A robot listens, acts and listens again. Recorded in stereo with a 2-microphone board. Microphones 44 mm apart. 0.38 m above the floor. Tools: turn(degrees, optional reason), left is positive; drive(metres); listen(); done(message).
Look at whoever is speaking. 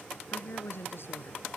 turn(degrees=65, reason="The woman speaking: about 65° left or 115° left.")
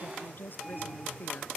turn(degrees=50, reason="So it is at 50° left.")
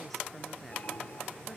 listen()
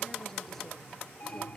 listen()
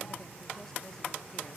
done("Facing where the woman speaking came from. I can't hear it now.")